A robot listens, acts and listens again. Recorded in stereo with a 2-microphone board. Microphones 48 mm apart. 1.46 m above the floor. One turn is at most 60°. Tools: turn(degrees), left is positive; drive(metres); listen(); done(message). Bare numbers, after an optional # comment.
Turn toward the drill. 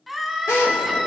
# The drill: about 75° left or 105° left.
turn(60)
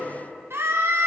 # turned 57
listen()
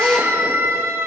# So it is at 25° left.
turn(25)
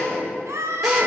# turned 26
done("Found it: a drill, straight ahead.")